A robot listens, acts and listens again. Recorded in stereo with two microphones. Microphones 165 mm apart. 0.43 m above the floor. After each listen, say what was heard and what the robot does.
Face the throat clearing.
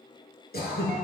The throat clearing: about 70° left or 110° left. Turn 70° left.
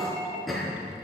Found it: throat clearing, straight ahead, over 4 m away.